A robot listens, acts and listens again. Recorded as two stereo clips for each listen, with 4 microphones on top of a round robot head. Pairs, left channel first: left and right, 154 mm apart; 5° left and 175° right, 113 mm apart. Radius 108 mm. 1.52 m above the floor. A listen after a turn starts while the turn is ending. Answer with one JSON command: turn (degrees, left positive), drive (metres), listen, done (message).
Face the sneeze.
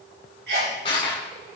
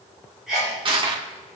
{"turn": -85}
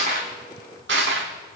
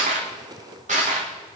{"done": "Facing where the sneeze came from. I can't hear it now."}